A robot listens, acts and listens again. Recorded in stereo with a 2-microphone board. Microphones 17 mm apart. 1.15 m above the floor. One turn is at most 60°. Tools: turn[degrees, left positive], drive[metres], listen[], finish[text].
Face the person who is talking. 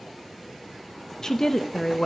Thought: The woman speaking: about 35° left or 145° left.
Action: turn[35]
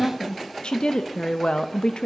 Thought: So it is at 105° left.
Action: turn[60]
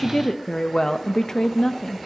Thought: The woman speaking is now 40° left.
Action: turn[40]
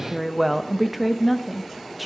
Action: finish[Found it: a woman speaking, straight ahead, 1 to 2 m away.]